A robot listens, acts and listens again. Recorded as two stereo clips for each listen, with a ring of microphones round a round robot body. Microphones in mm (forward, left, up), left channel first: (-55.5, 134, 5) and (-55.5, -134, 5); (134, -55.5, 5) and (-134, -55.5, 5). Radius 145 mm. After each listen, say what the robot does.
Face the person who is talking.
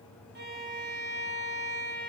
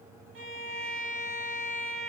Keep listening.
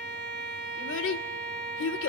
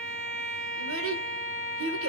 Turn 135° left.
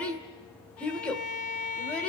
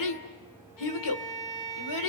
Found it: a child speaking, straight ahead, 2 to 4 m away.